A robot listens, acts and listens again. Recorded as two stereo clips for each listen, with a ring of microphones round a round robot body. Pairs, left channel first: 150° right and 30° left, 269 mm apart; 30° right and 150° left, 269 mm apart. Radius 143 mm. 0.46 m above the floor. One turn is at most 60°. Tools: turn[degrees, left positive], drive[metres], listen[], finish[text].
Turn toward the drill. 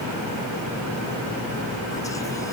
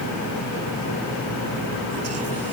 Action: listen[]
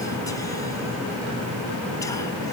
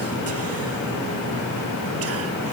Action: listen[]
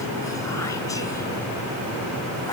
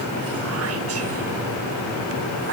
Action: finish[I can't make out a drill to turn to.]